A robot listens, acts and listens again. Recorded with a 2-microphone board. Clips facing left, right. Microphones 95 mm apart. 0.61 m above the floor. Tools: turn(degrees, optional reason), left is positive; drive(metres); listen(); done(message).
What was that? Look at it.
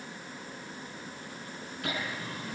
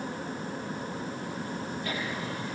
turn(degrees=75, reason="The laughter: about 75° left or 105° left.")
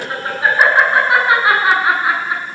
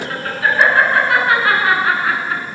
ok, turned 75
turn(degrees=20, reason="So it is at 20° left.")
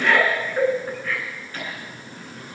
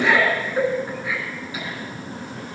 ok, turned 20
turn(degrees=-10, reason="The laughter is now 10° right.")
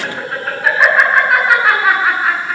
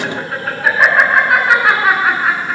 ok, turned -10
done("Facing the laughter.")